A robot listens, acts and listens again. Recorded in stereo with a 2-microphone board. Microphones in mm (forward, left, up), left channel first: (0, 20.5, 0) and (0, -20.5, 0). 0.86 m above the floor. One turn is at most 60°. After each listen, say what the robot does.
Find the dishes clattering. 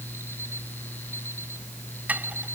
Turn 40° right.
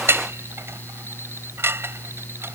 Turn 60° right.
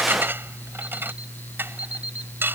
Turn 60° right.
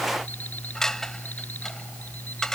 Turn 10° left.
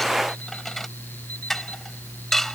Facing the dishes clattering.